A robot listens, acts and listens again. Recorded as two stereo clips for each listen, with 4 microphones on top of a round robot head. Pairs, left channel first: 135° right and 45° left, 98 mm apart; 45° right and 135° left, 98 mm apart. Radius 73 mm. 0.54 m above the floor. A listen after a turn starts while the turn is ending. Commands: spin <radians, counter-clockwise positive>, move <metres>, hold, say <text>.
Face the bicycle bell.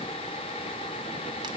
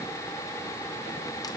hold
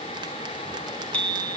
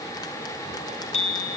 spin -0.96
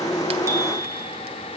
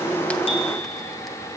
hold
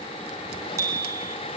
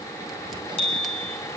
spin -0.26
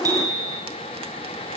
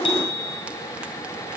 say Found it: a bicycle bell, straight ahead, 2 to 4 m away.